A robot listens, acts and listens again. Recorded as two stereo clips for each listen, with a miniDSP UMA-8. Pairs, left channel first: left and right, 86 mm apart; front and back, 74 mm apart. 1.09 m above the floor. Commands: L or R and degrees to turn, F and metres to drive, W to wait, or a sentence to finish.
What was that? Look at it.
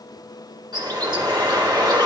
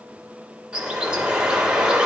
R105
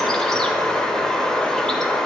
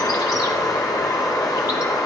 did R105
L10
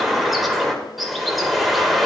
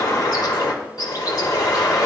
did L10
Facing the bird.